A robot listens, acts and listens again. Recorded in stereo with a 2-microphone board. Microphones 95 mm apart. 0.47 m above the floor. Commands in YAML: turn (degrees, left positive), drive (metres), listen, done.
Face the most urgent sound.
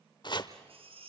turn: -90
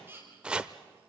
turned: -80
turn: -25
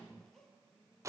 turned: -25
listen: true
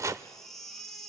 done: "Facing the baby crying."